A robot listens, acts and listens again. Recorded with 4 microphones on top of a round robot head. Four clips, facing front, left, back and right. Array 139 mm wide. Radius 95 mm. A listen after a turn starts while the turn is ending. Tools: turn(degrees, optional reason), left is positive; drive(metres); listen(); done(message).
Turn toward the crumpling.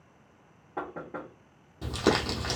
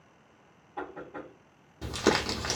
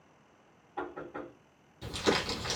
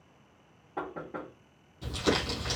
turn(degrees=45, reason="The crumpling: 45° left.")
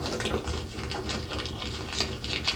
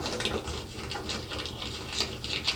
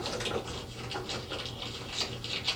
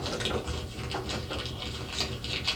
done("Facing the crumpling, under 1 m away.")